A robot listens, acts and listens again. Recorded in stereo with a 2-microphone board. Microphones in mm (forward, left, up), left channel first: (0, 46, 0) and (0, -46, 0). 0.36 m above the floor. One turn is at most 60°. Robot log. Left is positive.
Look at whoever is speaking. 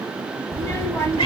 note: The child speaking: about 30° left or 150° left.
cmd yaw +30
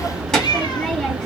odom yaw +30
note: So it is at 10° left.
cmd yaw +10
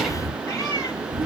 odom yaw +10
end: Facing the child speaking.